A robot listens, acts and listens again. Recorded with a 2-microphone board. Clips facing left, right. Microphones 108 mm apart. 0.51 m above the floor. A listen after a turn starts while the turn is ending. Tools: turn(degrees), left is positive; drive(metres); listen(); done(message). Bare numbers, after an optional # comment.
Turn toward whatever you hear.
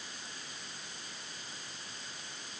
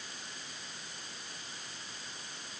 listen()
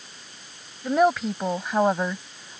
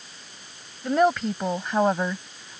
turn(30)
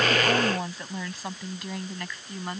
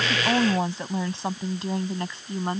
# So it is at 30° right.
turn(-30)
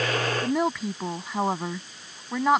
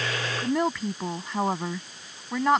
done("Found it: a woman speaking, straight ahead.")